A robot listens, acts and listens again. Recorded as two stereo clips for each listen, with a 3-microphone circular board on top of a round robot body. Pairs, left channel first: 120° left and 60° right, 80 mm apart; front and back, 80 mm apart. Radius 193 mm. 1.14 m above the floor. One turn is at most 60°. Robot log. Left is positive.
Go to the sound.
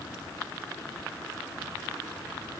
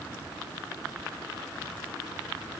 cmd idle
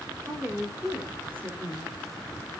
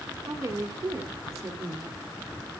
note: The woman speaking: 125° right.
cmd yaw -60
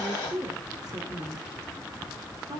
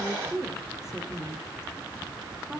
note: The woman speaking is now 95° right.
cmd yaw -60
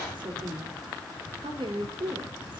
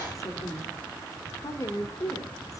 note: The woman speaking is now 50° right.
cmd yaw -50
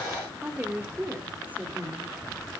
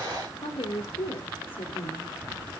note: The woman speaking is now 10° left.
cmd yaw +10
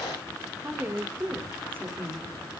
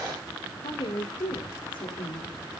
cmd fwd 1.0
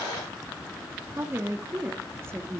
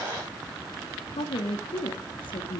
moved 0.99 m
cmd fwd 1.0
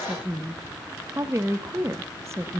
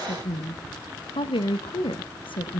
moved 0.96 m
cmd fwd 1.0
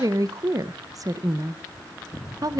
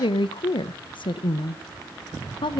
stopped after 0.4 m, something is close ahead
note: The woman speaking is now 15° right.
cmd yaw -15
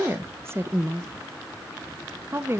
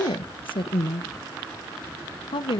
end: Arrived at the woman speaking, straight ahead.